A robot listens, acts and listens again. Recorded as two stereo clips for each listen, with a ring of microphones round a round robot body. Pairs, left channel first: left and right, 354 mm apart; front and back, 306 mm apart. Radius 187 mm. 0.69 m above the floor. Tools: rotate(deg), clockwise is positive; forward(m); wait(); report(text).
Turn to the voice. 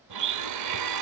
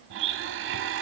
wait()
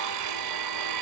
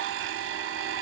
wait()
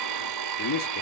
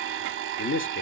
rotate(-50)
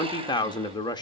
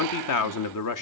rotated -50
rotate(-10)
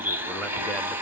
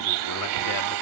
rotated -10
wait()
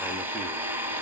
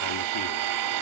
wait()
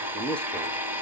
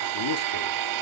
report("Found it: a man speaking, straight ahead, under 1 m away.")